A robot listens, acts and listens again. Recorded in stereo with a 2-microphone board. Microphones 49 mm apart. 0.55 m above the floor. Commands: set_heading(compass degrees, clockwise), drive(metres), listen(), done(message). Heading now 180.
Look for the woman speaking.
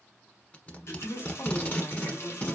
set_heading(135)
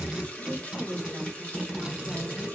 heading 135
set_heading(95)
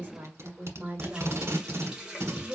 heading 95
set_heading(120)
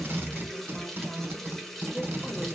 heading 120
listen()
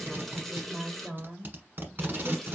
done("Facing the woman speaking, 2 to 4 m away.")